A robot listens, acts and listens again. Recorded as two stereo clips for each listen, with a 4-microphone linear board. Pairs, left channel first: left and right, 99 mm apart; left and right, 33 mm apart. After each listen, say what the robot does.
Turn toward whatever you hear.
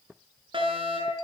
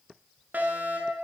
Turn 60° right.
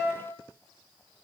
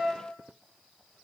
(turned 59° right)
Found it: a fire alarm, straight ahead, over 4 m away.